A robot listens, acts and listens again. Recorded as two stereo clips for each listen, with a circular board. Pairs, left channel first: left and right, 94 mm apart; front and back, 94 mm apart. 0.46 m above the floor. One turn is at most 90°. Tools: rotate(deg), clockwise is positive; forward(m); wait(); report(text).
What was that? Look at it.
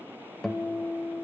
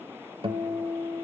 rotate(-90)
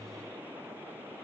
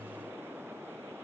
rotate(-85)
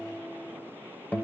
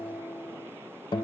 rotate(-20)
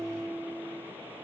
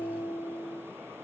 report("Facing the guitar.")